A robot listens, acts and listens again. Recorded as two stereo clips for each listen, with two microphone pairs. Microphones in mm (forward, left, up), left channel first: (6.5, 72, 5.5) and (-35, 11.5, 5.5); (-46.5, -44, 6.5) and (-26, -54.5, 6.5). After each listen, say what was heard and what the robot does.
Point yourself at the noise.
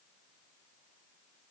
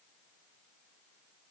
Keep listening.
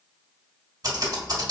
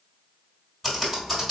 The typing on a keyboard: 115° right. Turn 115° right.
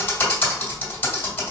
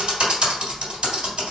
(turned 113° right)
Facing the typing on a keyboard.